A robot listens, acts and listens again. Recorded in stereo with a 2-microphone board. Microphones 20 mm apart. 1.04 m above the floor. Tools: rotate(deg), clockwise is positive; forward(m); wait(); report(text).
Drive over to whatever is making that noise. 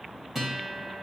rotate(30)
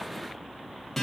rotate(-15)
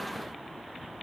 wait()
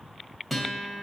forward(1.0)
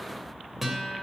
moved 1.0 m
rotate(10)
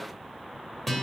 forward(1.0)
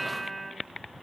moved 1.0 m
rotate(-10)
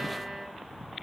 forward(1.0)
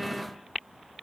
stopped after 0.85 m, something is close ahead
wait()
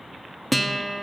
report("I am next to the guitar.")